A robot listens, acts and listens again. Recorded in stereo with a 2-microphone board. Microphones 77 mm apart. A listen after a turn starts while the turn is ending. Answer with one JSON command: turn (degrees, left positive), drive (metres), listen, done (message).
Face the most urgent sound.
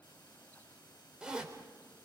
{"listen": true}
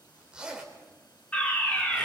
{"turn": 20}
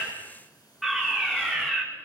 {"done": "Found it: a fire alarm, straight ahead."}